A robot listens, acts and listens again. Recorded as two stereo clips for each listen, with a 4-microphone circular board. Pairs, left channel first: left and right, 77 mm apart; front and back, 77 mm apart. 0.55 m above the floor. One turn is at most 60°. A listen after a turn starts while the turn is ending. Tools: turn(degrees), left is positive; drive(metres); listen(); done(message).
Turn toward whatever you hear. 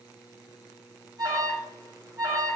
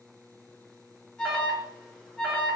turn(degrees=-60)
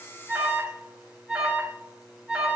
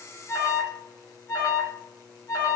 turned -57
turn(degrees=-15)
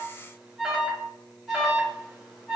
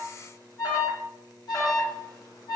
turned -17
done("Found it: an alarm, straight ahead, 1 to 2 m away.")